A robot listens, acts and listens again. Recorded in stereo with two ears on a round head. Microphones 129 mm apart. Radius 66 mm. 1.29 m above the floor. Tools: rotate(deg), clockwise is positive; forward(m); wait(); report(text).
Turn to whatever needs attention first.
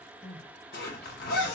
rotate(-30)
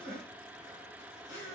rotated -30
rotate(30)
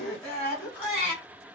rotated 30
report("Found it: crying, straight ahead.")